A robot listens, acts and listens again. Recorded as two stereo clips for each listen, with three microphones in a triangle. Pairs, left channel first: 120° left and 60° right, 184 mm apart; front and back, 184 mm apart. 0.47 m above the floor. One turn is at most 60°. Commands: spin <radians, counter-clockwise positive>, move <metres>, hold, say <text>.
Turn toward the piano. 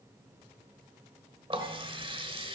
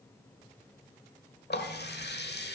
hold
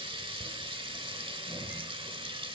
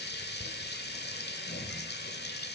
hold
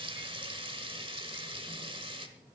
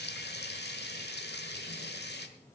say I can't make out a piano to turn to.